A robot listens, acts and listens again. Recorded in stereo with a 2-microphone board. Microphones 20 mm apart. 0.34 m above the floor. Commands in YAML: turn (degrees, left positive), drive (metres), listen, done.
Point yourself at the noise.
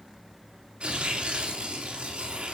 turn: -65
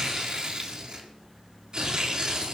turn: -45
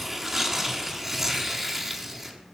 turn: -15
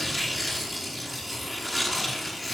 done: "Found it: tearing paper, straight ahead."